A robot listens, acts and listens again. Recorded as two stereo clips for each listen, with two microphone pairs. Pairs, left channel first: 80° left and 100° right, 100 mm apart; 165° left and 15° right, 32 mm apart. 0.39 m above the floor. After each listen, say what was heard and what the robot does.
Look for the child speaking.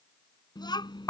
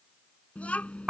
The child speaking: 120° left. Turn 120° left.
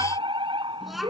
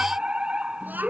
The child speaking is now 10° right. Turn 10° right.
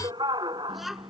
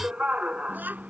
The child speaking is now 10° right. Turn 10° right.
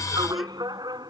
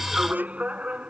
Keep listening.
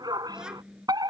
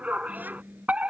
The child speaking is now 15° right. Turn 15° right.
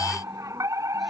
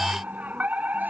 Keep listening.
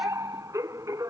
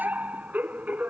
Keep listening.
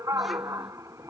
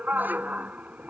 Facing where the child speaking came from. I can't hear it now.